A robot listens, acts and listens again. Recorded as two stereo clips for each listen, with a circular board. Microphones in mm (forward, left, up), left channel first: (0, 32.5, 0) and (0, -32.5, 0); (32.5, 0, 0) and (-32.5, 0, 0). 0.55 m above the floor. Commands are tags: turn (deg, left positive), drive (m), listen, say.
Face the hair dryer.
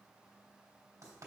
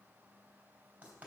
<listen/>
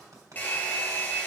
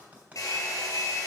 <turn deg="25"/>
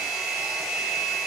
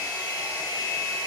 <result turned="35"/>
<say>Found it: a hair dryer, straight ahead.</say>